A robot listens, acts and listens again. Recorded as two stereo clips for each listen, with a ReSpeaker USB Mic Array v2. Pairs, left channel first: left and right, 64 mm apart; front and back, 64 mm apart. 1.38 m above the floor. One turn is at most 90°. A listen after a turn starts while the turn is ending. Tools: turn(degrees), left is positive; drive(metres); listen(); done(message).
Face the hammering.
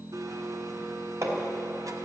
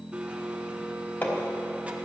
turn(degrees=-55)
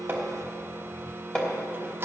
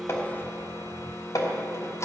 turn(degrees=15)
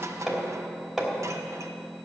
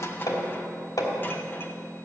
done("Found it: hammering, straight ahead.")